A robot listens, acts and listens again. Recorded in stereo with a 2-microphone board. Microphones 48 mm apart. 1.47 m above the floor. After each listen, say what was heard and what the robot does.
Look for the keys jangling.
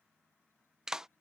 Keep listening.
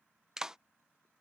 Keep listening.
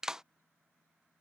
I can't make out keys jangling to turn to.